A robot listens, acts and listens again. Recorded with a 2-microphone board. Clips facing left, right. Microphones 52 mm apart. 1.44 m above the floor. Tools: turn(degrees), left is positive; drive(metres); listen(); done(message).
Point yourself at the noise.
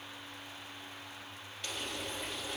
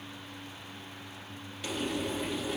turn(degrees=-30)
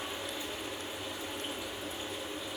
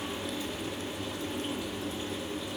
turn(degrees=25)
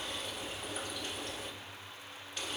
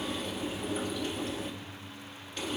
done("Facing the frying, 2 to 4 m away.")